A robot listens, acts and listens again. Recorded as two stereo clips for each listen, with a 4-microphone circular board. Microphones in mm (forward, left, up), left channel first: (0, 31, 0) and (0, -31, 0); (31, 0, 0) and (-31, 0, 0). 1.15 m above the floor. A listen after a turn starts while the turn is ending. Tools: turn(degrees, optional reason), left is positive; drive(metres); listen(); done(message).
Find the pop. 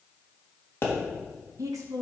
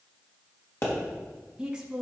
turn(degrees=40, reason="The pop: 40° left.")
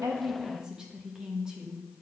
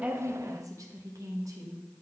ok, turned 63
turn(degrees=-20, reason="Nothing new. It was at 20° right.")
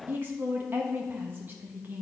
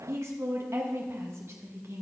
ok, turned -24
done("Facing where the pop came from. I can't hear it now.")